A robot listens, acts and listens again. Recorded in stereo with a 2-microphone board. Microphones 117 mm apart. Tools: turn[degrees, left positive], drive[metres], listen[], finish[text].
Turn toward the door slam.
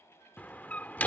Action: turn[30]
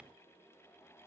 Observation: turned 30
Action: listen[]
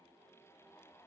Action: finish[I heard a door slam, but can't make it out now. It was about 15° right or 135° left.]